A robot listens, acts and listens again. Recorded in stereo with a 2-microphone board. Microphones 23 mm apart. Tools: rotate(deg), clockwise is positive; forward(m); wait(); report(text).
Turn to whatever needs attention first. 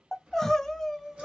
rotate(-30)
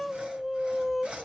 rotate(15)
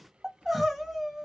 rotate(10)
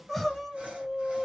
report("Facing the crying.")